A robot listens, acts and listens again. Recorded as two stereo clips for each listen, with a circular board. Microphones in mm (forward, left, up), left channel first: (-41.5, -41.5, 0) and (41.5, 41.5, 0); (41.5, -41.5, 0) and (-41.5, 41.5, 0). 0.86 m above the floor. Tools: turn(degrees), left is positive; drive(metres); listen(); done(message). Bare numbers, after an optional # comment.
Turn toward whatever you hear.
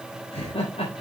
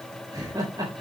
# The laughter: 170° right.
turn(-170)
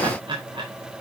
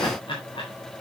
done("Found it: laughter, straight ahead, 2 to 4 m away.")